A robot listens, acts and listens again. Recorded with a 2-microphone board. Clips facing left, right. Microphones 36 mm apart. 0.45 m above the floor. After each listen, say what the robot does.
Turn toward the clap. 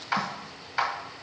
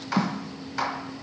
Turn 20° left.
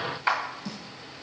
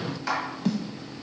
Turn 135° left.
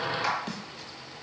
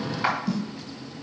Turn 25° right.
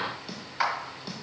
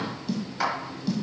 Turn 20° left.
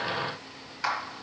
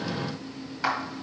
Found it: a clap, straight ahead, 1 to 2 m away.